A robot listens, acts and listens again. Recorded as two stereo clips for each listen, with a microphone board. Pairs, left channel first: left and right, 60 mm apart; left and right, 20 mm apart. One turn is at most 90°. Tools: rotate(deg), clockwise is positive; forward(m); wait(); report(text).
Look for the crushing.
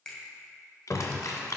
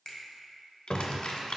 rotate(-60)
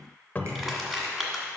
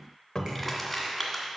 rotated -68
report("Found it: crushing, straight ahead, 1 to 2 m away.")